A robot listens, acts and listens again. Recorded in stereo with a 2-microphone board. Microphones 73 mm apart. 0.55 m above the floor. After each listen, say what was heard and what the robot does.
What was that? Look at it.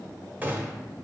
The gunshot: about 25° right or 155° right. Turn 25° right.
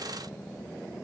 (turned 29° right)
Keep listening.
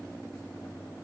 I heard a gunshot, but can't make it out now. It was about 5° left or 125° right.